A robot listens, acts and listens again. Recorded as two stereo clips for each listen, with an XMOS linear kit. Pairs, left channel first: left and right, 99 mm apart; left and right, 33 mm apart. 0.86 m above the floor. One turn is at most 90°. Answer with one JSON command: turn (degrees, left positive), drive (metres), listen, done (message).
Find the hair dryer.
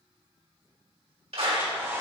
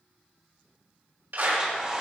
{"turn": -25}
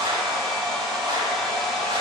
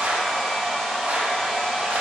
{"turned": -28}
{"done": "Found it: a hair dryer, straight ahead."}